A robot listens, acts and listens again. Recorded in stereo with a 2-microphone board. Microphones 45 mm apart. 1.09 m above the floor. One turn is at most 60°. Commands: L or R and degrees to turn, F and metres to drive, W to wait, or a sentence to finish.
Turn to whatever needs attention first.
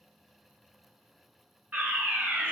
R40
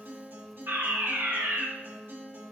R60
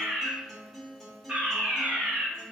R30
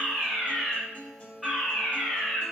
Facing the fire alarm.